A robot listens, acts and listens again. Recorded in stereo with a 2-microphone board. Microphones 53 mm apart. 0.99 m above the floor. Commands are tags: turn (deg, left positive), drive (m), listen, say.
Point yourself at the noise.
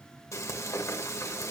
<turn deg="65"/>
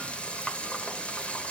<turn deg="20"/>
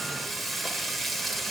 <say>Found it: frying, straight ahead, 1 to 2 m away.</say>